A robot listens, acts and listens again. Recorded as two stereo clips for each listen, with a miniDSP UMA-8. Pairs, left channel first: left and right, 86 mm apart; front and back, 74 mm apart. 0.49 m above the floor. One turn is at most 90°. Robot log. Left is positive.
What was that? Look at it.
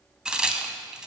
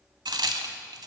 note: The crack: 175° right.
cmd yaw -90
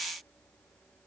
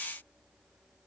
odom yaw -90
note: Nothing new. It was at 85° right.
cmd yaw -85
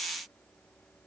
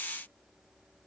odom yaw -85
end: Facing where the crack came from. I can't hear it now.